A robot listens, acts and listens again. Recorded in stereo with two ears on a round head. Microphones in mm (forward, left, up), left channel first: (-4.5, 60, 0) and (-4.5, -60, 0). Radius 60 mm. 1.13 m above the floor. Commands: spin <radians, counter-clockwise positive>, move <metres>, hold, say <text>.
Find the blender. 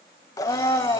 spin 0.44
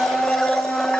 say Facing the blender.